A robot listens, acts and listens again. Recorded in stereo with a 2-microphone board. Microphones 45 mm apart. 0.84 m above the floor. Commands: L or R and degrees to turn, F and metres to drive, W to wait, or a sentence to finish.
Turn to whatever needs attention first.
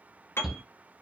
R30
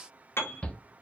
L25
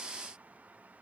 W
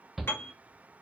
Found it: a shout, straight ahead, 1 to 2 m away.